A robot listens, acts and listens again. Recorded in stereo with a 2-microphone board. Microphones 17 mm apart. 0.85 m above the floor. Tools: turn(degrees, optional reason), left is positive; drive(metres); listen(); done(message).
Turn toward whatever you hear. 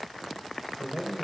turn(degrees=-90)
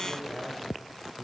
turn(degrees=15, reason="So it is at 15° left.")
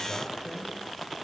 turn(degrees=10, reason="The man speaking is now 10° left.")
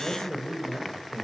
turn(degrees=10, reason="The man speaking is now 10° left.")
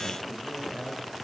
done("Found it: a man speaking, straight ahead, over 4 m away.")